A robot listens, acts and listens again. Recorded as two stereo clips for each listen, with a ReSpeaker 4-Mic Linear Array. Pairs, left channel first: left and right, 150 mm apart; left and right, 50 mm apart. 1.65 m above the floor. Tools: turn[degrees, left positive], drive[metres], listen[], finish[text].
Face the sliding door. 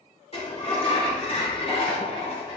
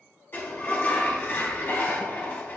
Thought: The sliding door: about 40° left or 140° left.
Action: turn[40]
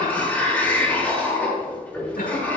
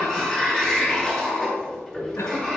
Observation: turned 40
Thought: So it is at 15° left.
Action: turn[15]
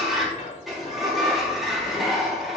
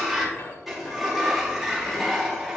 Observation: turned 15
Action: finish[Found it: a sliding door, straight ahead, 2 to 4 m away.]